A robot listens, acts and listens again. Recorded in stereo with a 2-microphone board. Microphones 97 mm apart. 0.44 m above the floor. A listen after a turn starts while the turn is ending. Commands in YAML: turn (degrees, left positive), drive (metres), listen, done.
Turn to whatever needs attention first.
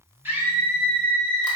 turn: -20
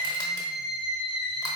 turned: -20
done: "Facing the scream."